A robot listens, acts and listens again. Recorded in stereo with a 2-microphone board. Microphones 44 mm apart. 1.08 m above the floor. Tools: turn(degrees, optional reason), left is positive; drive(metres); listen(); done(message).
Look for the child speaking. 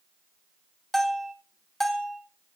listen()
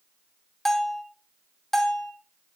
listen()
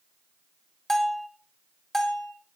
done("I can't make out a child speaking, only a bell.")